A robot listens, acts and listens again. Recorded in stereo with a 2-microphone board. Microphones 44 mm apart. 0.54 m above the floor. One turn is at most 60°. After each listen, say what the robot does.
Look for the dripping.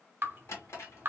Turn 55° right.
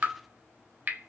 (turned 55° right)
Turn 55° right.
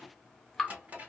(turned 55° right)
Facing the dripping.